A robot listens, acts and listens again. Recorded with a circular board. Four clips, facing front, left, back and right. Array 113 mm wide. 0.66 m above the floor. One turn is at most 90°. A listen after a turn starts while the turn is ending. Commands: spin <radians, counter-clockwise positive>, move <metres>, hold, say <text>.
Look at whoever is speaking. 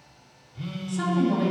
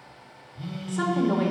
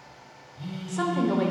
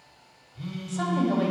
spin 1.57
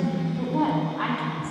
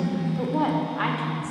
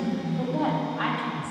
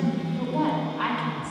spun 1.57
spin 1.57
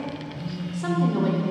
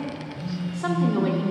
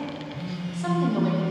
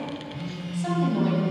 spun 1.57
spin 1.05
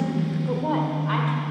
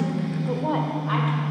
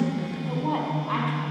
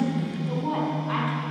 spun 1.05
spin 0.44
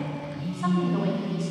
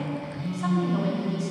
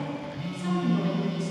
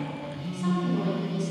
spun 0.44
hold
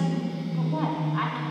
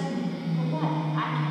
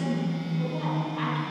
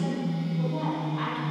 spin 0.26
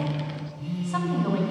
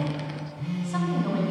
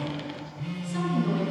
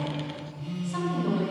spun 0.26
hold
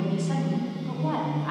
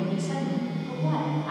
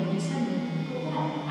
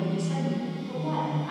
say Found it: a woman speaking, straight ahead.